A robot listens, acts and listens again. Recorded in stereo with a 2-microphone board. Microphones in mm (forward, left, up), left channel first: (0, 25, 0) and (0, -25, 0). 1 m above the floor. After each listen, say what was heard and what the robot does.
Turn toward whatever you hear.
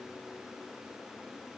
Keep listening.
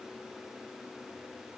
Keep listening.
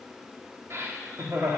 The laughter: about 70° right or 110° right. Turn 70° right.
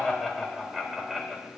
Facing the laughter, 2 to 4 m away.